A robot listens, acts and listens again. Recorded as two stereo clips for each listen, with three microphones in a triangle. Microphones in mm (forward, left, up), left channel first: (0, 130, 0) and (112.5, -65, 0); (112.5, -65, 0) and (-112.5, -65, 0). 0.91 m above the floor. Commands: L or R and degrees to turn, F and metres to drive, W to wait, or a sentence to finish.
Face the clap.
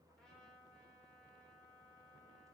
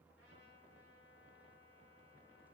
W
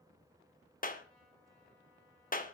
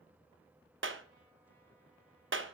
L165
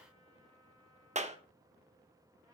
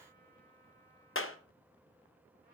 Facing the clap, under 1 m away.